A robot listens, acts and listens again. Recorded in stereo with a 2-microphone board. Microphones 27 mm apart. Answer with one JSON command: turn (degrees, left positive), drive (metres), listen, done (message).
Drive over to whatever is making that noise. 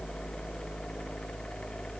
{"listen": true}
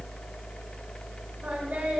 {"listen": true}
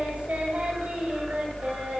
{"turn": -65}
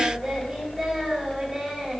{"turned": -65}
{"drive": 1.0}
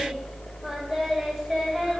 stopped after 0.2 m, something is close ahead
{"done": "Something is in my way. I am facing the singing but have not reached it."}